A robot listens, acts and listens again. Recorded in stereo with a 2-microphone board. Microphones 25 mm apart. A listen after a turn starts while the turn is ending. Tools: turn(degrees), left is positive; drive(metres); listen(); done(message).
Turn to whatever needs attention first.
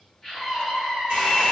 turn(degrees=30)
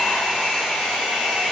listen()
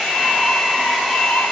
listen()
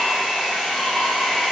done("I heard a scream, but can't make it out now. It was about 15° right or 135° left.")